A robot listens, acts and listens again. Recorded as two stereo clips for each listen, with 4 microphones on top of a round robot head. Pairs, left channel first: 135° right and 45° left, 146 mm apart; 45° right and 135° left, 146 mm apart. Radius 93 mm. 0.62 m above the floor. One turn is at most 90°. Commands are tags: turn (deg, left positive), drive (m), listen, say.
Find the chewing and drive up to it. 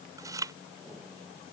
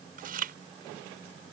<turn deg="90"/>
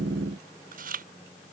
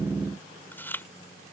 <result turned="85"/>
<turn deg="30"/>
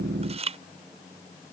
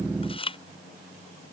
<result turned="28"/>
<drive m="1.0"/>
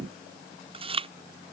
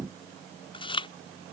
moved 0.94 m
<drive m="1.0"/>
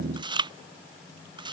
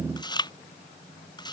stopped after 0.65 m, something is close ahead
<say>Arrived at the chewing, straight ahead.</say>